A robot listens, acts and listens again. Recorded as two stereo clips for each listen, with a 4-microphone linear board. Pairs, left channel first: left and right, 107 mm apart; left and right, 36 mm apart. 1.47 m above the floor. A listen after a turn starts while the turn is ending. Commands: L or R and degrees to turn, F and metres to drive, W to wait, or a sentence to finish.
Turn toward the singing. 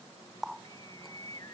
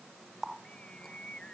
L35
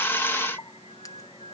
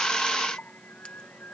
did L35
L115
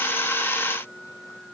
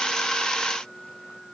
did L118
Found it: singing, straight ahead.